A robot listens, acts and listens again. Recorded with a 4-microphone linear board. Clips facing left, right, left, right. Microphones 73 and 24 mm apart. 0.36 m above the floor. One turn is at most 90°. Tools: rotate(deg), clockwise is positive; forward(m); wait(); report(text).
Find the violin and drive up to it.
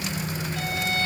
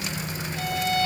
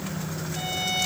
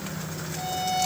rotate(-70)
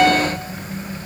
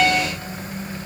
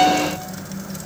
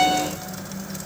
forward(1.0)
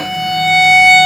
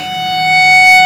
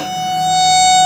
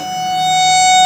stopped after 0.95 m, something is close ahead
report("Blocked. The violin is further on, straight ahead.")